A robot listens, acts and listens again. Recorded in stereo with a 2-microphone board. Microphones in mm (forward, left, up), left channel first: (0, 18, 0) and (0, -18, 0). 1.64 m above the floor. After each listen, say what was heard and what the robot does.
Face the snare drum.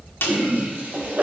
Turn 90° left.
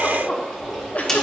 So it is at 10° left. Turn 10° left.
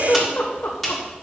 Found it: a snare drum, straight ahead, 1 to 2 m away.